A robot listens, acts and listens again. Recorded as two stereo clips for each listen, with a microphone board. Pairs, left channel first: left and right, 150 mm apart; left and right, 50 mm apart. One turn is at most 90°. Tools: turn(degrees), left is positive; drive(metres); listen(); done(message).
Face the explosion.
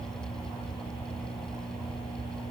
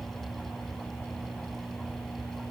listen()
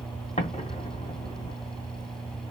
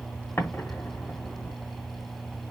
turn(degrees=50)
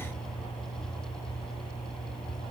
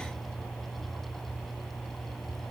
listen()
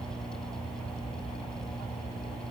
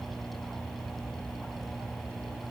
done("I heard an explosion, but can't make it out now. It was about straight ahead or 80° left.")